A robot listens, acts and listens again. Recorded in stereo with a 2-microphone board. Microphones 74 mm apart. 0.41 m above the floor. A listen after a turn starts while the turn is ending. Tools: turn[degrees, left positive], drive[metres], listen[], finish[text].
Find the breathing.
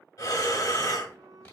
Thought: The breathing: about 60° left or 120° left.
Action: turn[60]
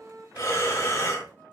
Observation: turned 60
Thought: So it is at 45° left.
Action: turn[45]
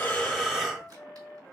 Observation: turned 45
Action: finish[Facing the breathing.]